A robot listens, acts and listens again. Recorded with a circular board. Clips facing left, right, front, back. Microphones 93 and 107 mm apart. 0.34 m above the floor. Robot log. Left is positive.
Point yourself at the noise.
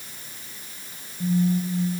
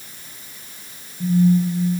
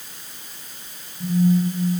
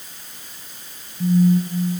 note: The phone buzzing: 160° left.
cmd yaw +160
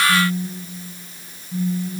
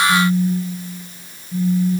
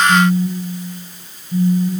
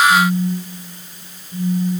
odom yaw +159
end: Found it: a phone buzzing, straight ahead.